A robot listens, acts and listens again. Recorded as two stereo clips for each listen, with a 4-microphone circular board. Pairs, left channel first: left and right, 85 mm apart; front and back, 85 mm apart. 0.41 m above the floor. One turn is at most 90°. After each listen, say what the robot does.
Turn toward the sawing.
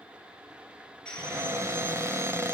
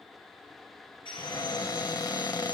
Turn 10° left.
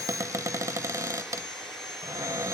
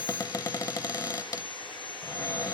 Found it: sawing, straight ahead, over 4 m away.